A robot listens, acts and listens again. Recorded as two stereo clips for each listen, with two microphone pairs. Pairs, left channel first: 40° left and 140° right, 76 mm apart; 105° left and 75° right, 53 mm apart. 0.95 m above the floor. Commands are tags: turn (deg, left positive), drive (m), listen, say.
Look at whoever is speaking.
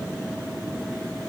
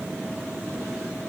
<listen/>
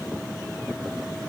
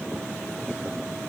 <listen/>
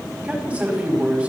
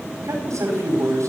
<turn deg="-65"/>
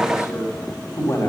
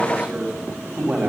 <turn deg="-10"/>
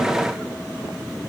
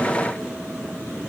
<listen/>
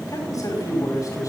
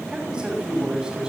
<say>Found it: a man speaking, straight ahead, over 4 m away.</say>